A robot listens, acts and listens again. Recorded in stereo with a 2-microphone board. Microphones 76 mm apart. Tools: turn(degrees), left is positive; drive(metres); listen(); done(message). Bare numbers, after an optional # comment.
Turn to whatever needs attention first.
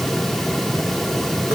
listen()
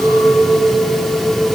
listen()
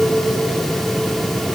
done("I can't make out anything urgent, only a clink.")